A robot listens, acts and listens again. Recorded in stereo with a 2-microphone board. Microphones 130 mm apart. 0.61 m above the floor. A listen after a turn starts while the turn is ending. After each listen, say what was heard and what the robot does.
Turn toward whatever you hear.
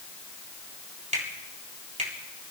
The finger snap: about 70° right or 110° right. Turn 70° right.
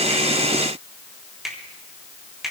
Facing the finger snap, 2 to 4 m away.